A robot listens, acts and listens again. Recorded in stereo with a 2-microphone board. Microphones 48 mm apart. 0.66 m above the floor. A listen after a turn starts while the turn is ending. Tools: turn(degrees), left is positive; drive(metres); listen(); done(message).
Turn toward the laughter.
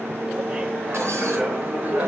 turn(degrees=-35)
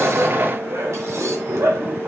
turn(degrees=-105)
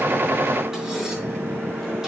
listen()
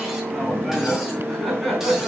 done("Found it: laughter, straight ahead.")